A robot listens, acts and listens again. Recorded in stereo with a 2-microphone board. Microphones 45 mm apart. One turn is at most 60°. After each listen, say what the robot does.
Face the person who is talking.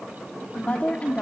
Turn 35° left.
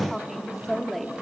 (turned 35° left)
Found it: a woman speaking, straight ahead.